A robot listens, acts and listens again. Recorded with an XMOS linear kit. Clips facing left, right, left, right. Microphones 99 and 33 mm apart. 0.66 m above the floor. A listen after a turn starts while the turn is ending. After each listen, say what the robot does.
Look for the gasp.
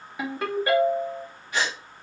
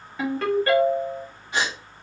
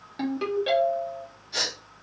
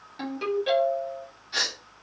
Turn 25° right.
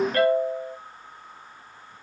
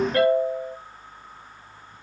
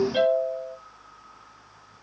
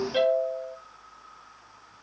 Keep listening.
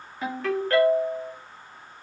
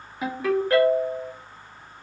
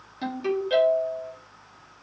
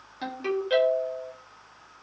I heard a gasp, but can't make it out now. It was about straight ahead or 130° right.